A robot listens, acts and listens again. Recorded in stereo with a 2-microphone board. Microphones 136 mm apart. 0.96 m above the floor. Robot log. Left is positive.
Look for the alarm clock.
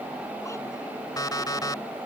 note: The alarm clock: about 30° left or 150° left.
cmd yaw +30
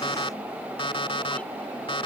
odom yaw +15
note: So it is at 140° left.
cmd yaw +140
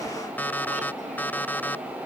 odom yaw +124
note: The alarm clock is now 15° left.
cmd yaw +15
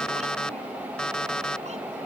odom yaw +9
end: Found it: an alarm clock, straight ahead.